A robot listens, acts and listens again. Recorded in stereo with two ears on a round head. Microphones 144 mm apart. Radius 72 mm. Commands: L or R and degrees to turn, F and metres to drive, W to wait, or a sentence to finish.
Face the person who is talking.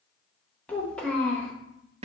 L30
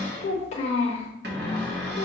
L140
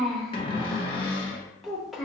Found it: a child speaking, straight ahead.